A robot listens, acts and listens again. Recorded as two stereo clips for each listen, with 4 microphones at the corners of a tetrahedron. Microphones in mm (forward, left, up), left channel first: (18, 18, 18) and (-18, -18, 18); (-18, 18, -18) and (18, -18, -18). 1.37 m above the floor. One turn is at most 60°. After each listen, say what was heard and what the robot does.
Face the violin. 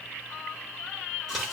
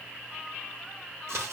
Keep listening.
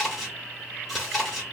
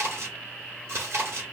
Keep listening.
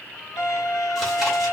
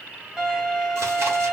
The violin: 30° left. Turn 30° left.
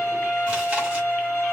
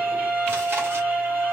Facing the violin, 1 to 2 m away.